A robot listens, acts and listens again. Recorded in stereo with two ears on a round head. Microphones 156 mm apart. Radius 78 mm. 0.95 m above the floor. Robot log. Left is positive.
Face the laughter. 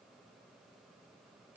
cmd idle
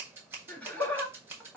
cmd yaw +30
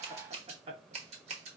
note: So it is at 30° right.
cmd yaw -30
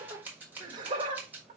note: The laughter is now 30° right.
cmd yaw -30
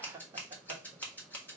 note: The laughter is now 25° right.
cmd yaw -25
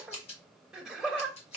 end: Found it: laughter, straight ahead.